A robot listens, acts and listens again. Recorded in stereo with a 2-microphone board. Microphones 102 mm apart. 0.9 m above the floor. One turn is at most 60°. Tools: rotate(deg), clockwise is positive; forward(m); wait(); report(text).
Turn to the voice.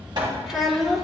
rotate(30)
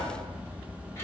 wait()
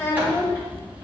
rotate(-25)
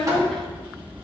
rotate(-10)
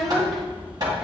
report("Found it: a child speaking, straight ahead.")